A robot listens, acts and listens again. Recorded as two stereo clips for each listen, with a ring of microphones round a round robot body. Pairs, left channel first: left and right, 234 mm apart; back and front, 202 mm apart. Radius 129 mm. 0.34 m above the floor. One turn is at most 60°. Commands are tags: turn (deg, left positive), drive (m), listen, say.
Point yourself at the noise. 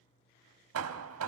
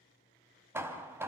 <turn deg="-60"/>
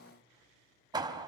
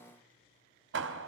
<turn deg="-20"/>
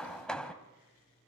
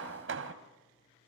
<say>Found it: hammering, straight ahead.</say>